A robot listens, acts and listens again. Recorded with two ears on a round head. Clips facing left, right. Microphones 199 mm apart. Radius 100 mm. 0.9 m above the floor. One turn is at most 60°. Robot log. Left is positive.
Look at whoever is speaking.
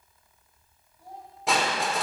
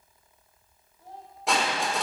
cmd yaw +30
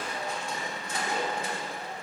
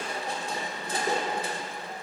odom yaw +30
cmd idle
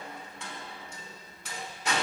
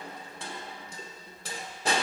cmd idle
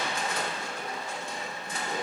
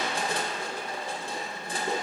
end: I heard a child speaking, but can't make it out now. It was about 20° right or 140° left.